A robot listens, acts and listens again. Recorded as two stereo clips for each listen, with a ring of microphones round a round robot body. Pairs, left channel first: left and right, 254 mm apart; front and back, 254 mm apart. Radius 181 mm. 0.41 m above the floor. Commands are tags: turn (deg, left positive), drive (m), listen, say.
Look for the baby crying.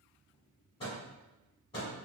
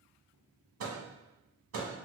<listen/>
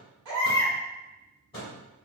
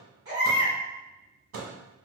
<turn deg="-105"/>
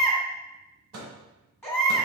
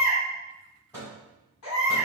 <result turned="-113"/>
<turn deg="10"/>
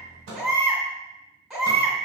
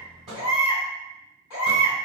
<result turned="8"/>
<say>Facing the baby crying, 1 to 2 m away.</say>